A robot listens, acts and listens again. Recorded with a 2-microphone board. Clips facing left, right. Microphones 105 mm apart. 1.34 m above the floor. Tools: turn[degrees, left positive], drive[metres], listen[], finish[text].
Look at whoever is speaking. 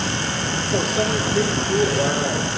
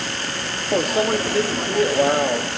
Action: listen[]
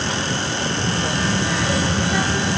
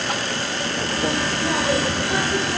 Thought: The child speaking: about 50° right or 130° right.
Action: turn[-50]
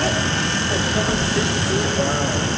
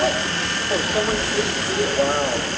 Thought: So it is at 10° right.
Action: turn[-10]
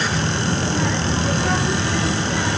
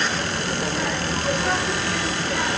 Action: finish[Found it: a child speaking, straight ahead.]